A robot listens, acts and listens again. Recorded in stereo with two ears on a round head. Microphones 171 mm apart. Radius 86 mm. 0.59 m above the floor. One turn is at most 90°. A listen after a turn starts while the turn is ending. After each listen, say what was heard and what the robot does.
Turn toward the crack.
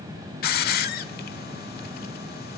Keep listening.
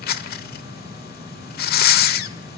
Keep listening.
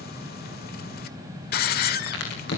The crack: about 60° left or 120° left. Turn 60° left.
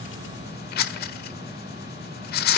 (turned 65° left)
Keep listening.
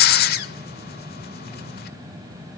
I heard a crack, but can't make it out now. It was about 5° right or 55° left.